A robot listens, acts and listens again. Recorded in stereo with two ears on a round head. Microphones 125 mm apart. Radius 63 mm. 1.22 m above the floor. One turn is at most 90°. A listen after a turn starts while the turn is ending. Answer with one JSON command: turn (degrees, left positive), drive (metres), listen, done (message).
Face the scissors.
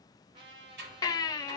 {"turn": -90}
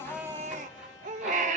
{"listen": true}
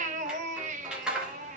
{"done": "Facing the scissors."}